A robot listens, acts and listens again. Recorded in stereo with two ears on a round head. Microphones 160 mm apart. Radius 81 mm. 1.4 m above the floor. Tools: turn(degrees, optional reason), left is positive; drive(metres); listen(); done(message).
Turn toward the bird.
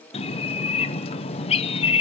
turn(degrees=35, reason="The bird: about 35° left or 145° left.")
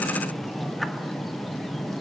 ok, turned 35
done("Found it: a bird, straight ahead.")